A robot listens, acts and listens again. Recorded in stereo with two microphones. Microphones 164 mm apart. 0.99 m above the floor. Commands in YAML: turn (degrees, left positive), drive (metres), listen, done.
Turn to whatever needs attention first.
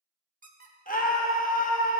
turn: 55
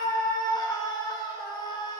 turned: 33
turn: 25
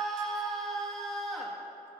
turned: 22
done: "Found it: a scream, straight ahead."